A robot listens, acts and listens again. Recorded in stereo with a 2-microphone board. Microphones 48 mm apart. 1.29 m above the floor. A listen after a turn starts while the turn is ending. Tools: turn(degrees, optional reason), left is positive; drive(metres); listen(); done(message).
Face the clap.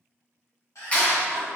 turn(degrees=30, reason="The clap: about 30° left or 150° left.")
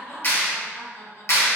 turn(degrees=120, reason="So it is at 120° left.")
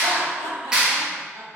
turn(degrees=-20, reason="The clap is now 20° right.")
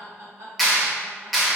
done("Found it: a clap, straight ahead, under 1 m away.")